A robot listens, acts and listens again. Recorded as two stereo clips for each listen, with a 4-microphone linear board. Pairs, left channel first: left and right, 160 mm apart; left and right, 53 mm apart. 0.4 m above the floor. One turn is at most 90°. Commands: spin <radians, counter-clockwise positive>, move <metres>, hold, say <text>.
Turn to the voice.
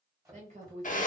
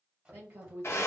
spin -0.79
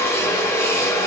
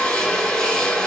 hold
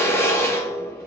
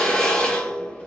hold
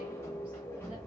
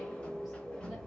say I heard a woman speaking, but can't make it out now. It was about straight ahead or 90° right.